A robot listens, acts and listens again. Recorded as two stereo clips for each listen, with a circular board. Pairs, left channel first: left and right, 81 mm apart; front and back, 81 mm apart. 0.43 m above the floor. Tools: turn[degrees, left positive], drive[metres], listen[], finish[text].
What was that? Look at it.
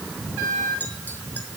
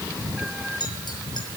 Thought: The clink: 25° left.
Action: turn[25]
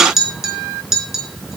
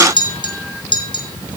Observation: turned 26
Action: finish[Facing the clink, 2 to 4 m away.]